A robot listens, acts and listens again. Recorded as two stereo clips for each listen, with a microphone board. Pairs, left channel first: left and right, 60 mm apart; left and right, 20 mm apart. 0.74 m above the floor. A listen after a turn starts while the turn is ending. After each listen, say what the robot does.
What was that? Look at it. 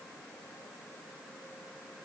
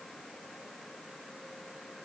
Keep listening.
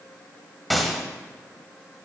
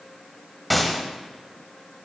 Turn 30° left.
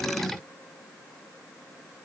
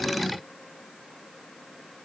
Keep listening.
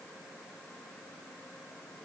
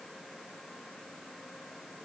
I heard a gunshot, but can't make it out now. It was about 30° right or 150° left.